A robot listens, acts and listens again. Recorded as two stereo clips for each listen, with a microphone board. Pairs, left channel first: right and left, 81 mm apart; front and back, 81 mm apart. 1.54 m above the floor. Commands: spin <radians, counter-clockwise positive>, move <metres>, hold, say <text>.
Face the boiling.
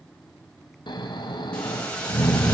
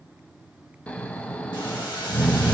spin -0.26
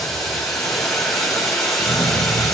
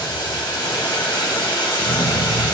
say Facing the boiling, 2 to 4 m away.